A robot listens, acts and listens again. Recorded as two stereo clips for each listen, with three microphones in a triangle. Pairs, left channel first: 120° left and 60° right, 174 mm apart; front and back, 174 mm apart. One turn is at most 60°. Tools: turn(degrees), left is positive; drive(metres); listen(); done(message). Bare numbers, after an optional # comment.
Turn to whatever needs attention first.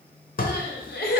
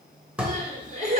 # The crying: 135° left.
turn(60)
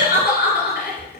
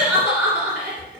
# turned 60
# The crying is now 95° left.
turn(60)
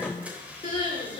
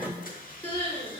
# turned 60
# The crying is now 60° left.
turn(60)
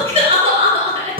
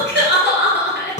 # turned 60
done("Found it: crying, straight ahead.")